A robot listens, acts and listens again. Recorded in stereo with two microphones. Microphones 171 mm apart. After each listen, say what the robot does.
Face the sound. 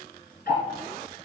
Turn 65° left.
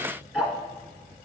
Found it: ticking, straight ahead, 1 to 2 m away.